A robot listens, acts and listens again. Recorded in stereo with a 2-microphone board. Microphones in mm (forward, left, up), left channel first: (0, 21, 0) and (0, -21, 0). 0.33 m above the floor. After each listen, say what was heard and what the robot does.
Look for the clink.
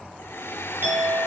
The clink: about 60° right or 120° right. Turn 60° right.
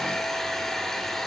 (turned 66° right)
Keep listening.
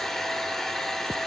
Keep listening.
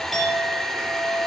Found it: a clink, straight ahead, over 4 m away.